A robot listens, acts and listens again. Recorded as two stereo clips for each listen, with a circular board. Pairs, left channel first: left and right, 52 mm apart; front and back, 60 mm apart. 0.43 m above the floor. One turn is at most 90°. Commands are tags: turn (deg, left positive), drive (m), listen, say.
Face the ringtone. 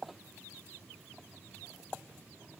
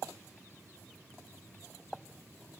<listen/>
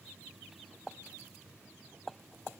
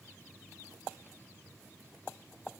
<listen/>
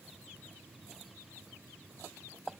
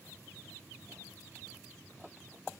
<say>I can't make out a ringtone to turn to.</say>